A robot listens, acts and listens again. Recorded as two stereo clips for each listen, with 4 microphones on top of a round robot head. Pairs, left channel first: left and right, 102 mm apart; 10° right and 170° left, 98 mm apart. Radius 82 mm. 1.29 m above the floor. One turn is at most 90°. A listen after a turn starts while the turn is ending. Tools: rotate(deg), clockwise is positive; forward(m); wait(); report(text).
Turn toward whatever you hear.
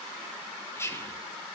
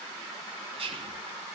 rotate(-90)
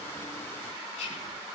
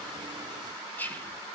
rotate(-65)
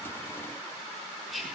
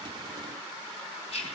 report("Facing the whispering, over 4 m away.")